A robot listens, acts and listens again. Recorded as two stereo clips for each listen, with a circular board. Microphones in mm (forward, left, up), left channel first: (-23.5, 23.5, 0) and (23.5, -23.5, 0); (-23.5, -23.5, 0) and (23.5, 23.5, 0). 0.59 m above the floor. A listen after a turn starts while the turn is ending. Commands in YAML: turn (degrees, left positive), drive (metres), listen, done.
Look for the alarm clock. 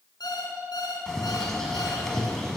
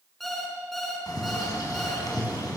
turn: 140
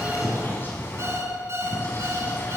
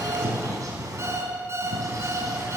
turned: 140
done: "Facing the alarm clock, over 4 m away."